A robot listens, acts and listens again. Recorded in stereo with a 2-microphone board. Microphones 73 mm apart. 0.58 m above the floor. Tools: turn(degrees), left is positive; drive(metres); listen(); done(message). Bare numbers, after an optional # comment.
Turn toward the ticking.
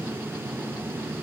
listen()
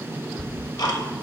# The ticking: about 65° left or 115° left.
turn(65)
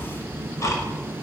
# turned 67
# So it is at 45° left.
turn(45)
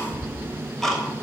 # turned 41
done("Found it: ticking, straight ahead, 1 to 2 m away.")